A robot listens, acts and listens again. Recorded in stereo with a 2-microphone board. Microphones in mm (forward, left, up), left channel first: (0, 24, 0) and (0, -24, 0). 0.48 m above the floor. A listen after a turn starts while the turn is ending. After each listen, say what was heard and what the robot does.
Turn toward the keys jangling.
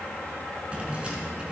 The keys jangling: about 20° right or 160° right. Turn 20° right.
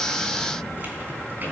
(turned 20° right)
The keys jangling: about 40° right or 140° right. Turn 40° right.
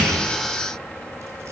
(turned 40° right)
Keep listening.
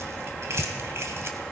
So it is at 115° right. Turn 115° right.
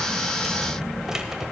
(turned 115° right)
The keys jangling is now 10° right. Turn 10° right.
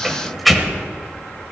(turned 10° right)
Facing the keys jangling.